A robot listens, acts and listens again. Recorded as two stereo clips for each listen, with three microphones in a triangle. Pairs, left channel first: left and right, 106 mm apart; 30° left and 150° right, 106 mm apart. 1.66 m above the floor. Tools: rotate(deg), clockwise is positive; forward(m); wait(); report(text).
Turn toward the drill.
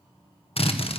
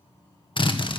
rotate(-65)
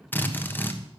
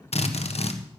rotate(-20)
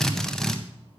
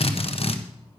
report("Facing the drill.")